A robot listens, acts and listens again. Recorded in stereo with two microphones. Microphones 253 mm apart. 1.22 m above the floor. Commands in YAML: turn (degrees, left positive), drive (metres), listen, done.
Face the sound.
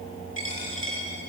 turn: 50
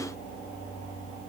listen: true
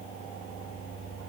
done: "I heard a dropped coin, but can't make it out now. It was about straight ahead or 80° left."